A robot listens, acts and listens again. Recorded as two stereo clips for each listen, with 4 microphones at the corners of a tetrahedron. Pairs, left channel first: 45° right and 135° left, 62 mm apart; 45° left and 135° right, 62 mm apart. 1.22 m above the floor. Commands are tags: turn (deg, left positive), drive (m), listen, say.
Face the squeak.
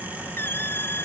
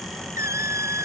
<turn deg="-95"/>
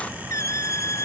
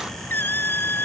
<turn deg="-10"/>
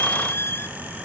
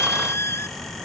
<say>Found it: a squeak, straight ahead.</say>